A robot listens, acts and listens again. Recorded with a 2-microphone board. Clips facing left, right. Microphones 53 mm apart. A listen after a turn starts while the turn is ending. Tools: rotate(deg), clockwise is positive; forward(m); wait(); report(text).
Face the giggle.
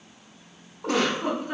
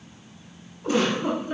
rotate(-65)
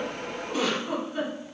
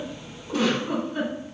report("Found it: a giggle, straight ahead, 1 to 2 m away.")